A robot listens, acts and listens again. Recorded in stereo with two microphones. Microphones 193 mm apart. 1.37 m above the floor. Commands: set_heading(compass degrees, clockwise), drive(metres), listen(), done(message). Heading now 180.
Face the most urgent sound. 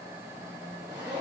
listen()
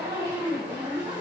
listen()
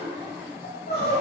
set_heading(130)
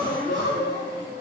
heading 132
set_heading(52)
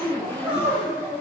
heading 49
done("Found it: crying, straight ahead.")